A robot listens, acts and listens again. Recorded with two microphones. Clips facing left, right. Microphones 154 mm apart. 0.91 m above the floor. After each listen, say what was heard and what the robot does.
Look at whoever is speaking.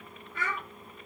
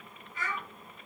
The child speaking: about 60° left or 120° left. Turn 60° left.
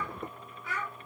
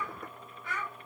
Facing the child speaking, 1 to 2 m away.